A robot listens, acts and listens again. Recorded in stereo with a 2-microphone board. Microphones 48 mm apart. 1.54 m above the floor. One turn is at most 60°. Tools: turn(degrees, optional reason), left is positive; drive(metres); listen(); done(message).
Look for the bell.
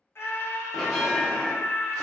turn(degrees=30)
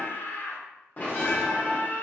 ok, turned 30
turn(degrees=60, reason="So it is at 150° left.")
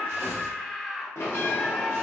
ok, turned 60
turn(degrees=60, reason="The bell is now 75° left.")
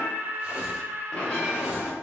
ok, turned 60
turn(degrees=20, reason="The bell is now 20° left.")
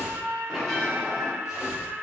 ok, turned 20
done("Facing the bell, under 1 m away.")